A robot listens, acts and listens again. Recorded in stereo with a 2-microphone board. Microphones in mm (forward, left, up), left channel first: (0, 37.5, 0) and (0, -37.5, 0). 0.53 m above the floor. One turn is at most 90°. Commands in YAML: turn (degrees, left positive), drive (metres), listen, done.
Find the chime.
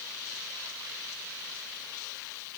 listen: true
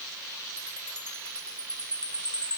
turn: 15
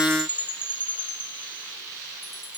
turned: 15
turn: 90
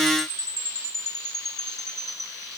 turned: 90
turn: 85
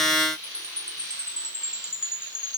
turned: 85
turn: -15
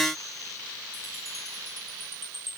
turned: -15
done: "Facing the chime, 2 to 4 m away."